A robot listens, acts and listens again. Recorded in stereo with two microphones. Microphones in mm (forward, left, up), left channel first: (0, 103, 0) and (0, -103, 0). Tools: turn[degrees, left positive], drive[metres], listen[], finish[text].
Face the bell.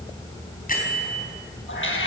Thought: The bell: about 45° left or 135° left.
Action: turn[45]
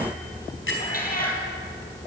Thought: So it is at 95° left.
Action: turn[95]
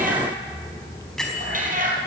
Action: finish[Found it: a bell, straight ahead.]